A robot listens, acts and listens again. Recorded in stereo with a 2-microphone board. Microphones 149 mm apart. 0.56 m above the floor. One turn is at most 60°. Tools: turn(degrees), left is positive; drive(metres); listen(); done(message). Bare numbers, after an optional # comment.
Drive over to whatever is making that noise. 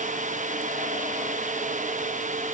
listen()
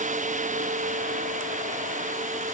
listen()
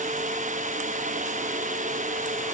done("I can't make out anything to turn to.")